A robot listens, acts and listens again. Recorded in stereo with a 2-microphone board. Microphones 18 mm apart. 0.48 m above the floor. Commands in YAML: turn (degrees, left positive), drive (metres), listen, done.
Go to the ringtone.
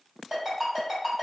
turn: -40
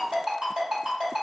turn: -105
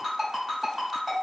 turn: -15
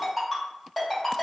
drive: 1.0
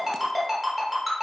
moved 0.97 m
drive: 1.0
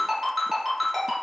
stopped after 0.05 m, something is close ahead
done: "Arrived at the ringtone, straight ahead."